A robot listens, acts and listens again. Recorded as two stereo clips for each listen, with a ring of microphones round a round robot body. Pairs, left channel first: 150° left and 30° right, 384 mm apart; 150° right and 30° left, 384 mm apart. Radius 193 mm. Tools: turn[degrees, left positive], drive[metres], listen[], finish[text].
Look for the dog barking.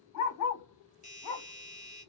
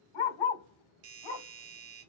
Thought: The dog barking: 175° right.
Action: turn[-175]
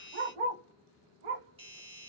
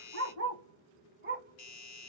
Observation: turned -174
Thought: The dog barking is now 40° right.
Action: turn[-40]
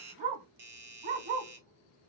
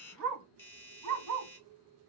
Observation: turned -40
Thought: The dog barking is now 20° right.
Action: turn[-20]
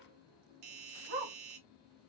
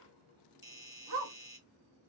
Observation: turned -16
Action: finish[Facing the dog barking.]